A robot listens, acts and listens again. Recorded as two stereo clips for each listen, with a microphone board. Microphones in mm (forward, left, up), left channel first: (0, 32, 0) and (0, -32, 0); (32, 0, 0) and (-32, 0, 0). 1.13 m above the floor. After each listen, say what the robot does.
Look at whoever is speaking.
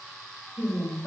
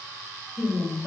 Turn 40° left.
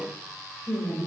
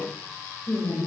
Turn 10° right.
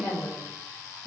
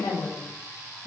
Turn 10° right.
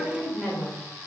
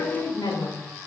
Found it: a woman speaking, straight ahead, over 4 m away.